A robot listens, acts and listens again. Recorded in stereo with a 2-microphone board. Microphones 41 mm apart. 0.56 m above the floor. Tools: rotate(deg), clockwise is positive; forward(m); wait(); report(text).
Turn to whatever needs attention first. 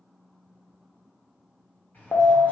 rotate(-70)
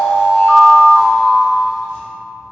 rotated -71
rotate(-15)
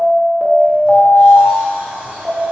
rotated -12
report("Facing the alarm, under 1 m away.")